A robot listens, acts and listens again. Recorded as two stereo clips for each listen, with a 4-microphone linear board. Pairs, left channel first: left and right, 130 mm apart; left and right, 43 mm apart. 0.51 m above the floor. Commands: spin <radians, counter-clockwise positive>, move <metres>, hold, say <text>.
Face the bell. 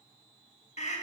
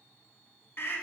hold
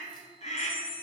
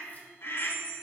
spin -0.61
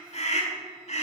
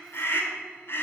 hold
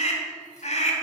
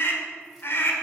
hold
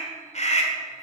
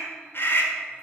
say I heard a bell, but can't make it out now. It was about straight ahead or 110° right.